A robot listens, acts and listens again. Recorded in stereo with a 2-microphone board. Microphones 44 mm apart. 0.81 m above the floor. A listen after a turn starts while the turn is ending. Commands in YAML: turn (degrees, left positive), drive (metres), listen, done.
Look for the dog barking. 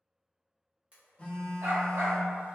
turn: -90
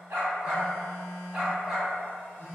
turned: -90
turn: -10
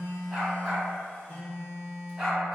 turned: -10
done: "Found it: a dog barking, straight ahead."